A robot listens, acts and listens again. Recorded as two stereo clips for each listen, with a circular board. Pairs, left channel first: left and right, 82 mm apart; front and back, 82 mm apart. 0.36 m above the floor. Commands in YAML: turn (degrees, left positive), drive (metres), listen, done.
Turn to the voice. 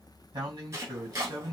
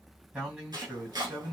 turn: -105
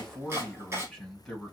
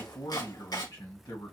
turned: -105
done: "Found it: a man speaking, straight ahead."